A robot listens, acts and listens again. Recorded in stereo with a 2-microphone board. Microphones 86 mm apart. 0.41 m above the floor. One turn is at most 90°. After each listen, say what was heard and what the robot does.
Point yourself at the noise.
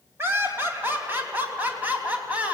The laughter: about 15° right or 165° right. Turn 15° right.
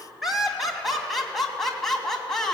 Turn 30° left.
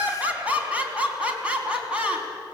So it is at 10° right. Turn 10° right.
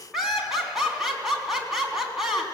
Facing the laughter, over 4 m away.